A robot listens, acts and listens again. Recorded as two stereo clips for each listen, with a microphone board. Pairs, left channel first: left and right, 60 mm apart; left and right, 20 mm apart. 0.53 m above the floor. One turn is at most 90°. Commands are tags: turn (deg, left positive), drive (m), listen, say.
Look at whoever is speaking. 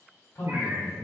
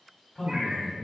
<turn deg="65"/>
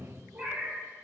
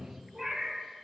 <turn deg="35"/>
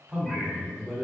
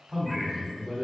<say>Found it: a man speaking, straight ahead, 1 to 2 m away.</say>